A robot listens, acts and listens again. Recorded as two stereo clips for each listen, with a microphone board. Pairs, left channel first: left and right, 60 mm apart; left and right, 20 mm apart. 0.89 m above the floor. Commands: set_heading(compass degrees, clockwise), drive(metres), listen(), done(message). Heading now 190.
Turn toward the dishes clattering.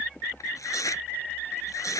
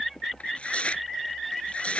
listen()
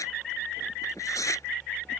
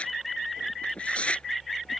listen()
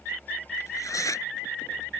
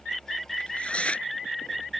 done("I can't make out dishes clattering to turn to.")